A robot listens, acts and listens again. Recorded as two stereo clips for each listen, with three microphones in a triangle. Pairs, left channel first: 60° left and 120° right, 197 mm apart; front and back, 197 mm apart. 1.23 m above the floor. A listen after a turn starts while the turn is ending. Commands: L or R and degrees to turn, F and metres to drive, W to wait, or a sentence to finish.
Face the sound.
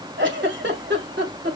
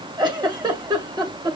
R115
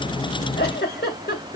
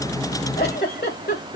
L30
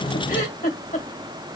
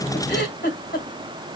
L15
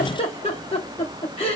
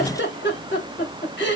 Found it: a giggle, straight ahead.